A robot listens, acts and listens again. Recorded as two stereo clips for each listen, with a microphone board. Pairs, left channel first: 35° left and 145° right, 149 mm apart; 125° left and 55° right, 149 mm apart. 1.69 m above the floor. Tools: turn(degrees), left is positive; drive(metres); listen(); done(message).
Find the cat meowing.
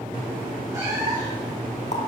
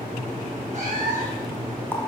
turn(degrees=-80)
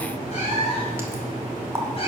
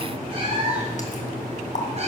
turn(degrees=-10)
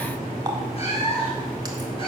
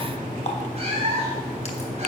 turn(degrees=-10)
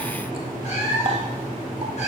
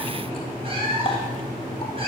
done("Facing the cat meowing, over 4 m away.")